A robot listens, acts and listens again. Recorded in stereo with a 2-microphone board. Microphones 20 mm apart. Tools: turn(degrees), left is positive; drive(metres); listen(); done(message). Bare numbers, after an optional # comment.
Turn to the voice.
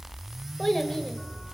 # The child speaking: about 15° left or 165° left.
turn(15)
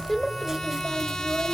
done("Facing the child speaking, 1 to 2 m away.")